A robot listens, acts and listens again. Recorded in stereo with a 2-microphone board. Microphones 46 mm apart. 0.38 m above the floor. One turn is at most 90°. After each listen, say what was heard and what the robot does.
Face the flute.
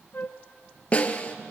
The flute: about 40° left or 140° left. Turn 40° left.
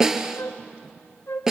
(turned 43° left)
So it is at 85° left. Turn 85° left.
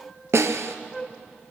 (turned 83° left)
Facing the flute, under 1 m away.